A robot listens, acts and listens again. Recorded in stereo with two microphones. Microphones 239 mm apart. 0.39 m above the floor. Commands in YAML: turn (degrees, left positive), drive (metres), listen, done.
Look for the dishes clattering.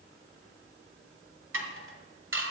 turn: -60
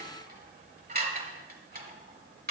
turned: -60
turn: -45
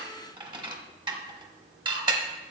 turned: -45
turn: -20
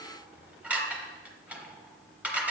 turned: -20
done: "Facing the dishes clattering, 1 to 2 m away."